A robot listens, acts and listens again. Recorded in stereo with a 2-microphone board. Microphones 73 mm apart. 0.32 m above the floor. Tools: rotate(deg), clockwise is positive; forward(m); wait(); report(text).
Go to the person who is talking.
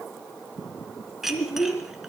rotate(-35)
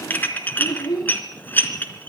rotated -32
rotate(-110)
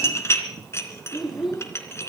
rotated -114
forward(1.0)
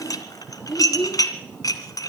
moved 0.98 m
forward(1.0)
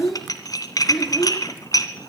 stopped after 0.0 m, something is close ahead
report("Blocked. The child speaking is further on, straight ahead.")